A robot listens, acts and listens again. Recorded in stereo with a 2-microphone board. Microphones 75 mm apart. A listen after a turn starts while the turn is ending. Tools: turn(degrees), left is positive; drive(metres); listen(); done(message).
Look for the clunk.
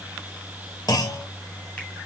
turn(degrees=60)
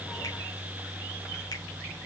listen()
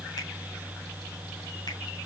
done("I heard a clunk, but can't make it out now. It was about straight ahead or 60° left.")